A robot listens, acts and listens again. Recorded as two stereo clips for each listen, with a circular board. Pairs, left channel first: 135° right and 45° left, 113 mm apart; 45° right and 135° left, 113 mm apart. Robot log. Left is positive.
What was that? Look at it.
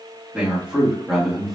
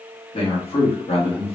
note: The man speaking: 45° right.
cmd yaw -45
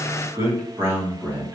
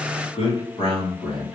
note: The man speaking is now 25° right.
cmd yaw -25
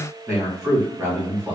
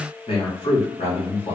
note: The man speaking is now 20° right.
cmd yaw -20
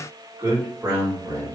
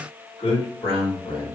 note: The man speaking is now 20° right.
cmd yaw -20
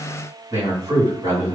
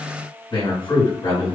end: Found it: a man speaking, straight ahead.